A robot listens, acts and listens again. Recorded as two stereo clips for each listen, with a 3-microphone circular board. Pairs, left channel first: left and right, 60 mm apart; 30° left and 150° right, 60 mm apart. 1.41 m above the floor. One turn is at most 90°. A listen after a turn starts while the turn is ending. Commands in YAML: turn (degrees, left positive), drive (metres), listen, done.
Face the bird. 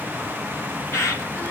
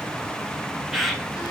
turn: 90
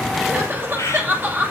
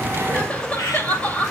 turn: 55
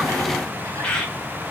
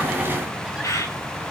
turn: 15
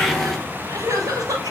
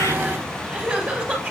listen: true
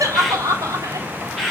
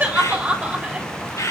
done: "Found it: a bird, straight ahead."